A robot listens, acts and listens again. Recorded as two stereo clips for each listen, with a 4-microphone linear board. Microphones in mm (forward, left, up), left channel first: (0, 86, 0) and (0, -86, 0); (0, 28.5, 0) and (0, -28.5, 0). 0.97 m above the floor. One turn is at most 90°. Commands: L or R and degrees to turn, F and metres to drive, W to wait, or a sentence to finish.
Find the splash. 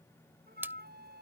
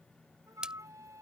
R30
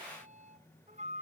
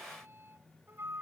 W
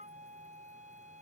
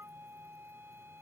I heard a splash, but can't make it out now. It was about 20° left or 140° right.